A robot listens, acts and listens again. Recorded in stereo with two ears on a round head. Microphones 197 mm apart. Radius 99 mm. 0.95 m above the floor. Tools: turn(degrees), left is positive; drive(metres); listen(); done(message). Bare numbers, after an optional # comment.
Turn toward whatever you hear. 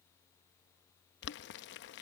# The boiling: about 55° left or 125° left.
turn(55)
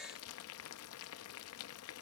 # So it is at 70° left.
turn(70)
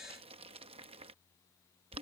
# The boiling is now 25° right.
turn(-25)
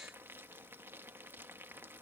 # The boiling is now 10° right.
turn(-10)
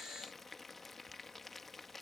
done("Facing the boiling.")